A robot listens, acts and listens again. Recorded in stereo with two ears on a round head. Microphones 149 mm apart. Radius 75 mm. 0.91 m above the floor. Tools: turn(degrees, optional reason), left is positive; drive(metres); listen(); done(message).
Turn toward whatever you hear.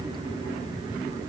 listen()
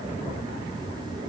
listen()
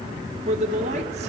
turn(degrees=-45, reason="The man speaking: about 45° right or 135° right.")
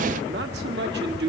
turn(degrees=-95, reason="So it is at 95° right.")
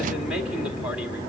done("Found it: a man speaking, straight ahead.")